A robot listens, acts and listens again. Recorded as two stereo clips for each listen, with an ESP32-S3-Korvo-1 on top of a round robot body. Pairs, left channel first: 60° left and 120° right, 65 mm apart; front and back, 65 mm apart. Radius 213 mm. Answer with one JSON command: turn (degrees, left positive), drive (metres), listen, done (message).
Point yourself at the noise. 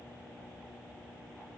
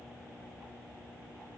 {"listen": true}
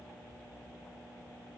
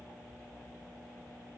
{"listen": true}
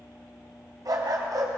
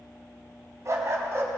{"turn": -135}
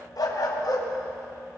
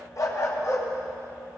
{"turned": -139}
{"turn": 45}
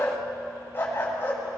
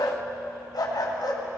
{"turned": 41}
{"done": "Found it: a dog barking, straight ahead."}